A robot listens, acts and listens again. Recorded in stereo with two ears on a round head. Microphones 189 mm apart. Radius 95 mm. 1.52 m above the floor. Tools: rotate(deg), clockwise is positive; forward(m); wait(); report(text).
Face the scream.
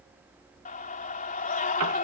rotate(-40)
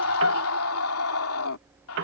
rotate(-100)
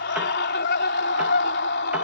rotate(-50)
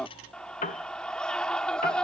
report("Found it: a scream, straight ahead.")